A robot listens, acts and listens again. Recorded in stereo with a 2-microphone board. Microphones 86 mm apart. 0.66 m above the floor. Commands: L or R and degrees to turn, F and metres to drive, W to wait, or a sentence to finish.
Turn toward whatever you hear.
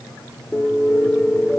L30
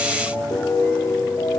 L145
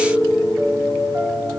R35
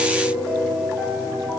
R15
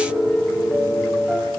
Found it: a piano, straight ahead.